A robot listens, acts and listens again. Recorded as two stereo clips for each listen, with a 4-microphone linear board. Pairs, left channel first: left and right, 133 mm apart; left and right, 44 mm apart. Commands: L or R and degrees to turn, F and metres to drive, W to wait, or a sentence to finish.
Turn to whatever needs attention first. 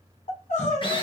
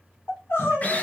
L70
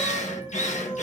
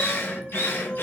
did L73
L35
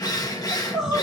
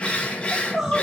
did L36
Facing the crying.